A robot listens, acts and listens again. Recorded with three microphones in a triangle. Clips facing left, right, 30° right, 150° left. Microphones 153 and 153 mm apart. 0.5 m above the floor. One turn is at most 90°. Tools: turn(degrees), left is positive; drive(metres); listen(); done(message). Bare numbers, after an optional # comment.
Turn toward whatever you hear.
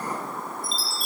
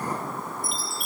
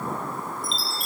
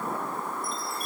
# The chime: 15° right.
turn(-15)
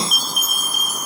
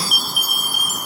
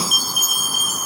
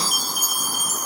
done("Facing the chime.")